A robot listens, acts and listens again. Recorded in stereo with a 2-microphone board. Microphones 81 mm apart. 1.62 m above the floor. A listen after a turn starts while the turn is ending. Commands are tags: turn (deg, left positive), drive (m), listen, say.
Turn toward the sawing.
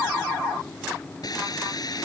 <turn deg="50"/>
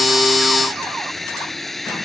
<say>Found it: sawing, straight ahead.</say>